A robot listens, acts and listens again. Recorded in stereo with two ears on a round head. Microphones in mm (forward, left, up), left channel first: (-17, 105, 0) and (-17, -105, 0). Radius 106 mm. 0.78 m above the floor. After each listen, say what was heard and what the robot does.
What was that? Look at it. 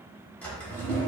Turn 30° left.
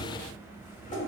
So it is at 140° left. Turn 140° left.
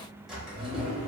Found it: a drawer, straight ahead, under 1 m away.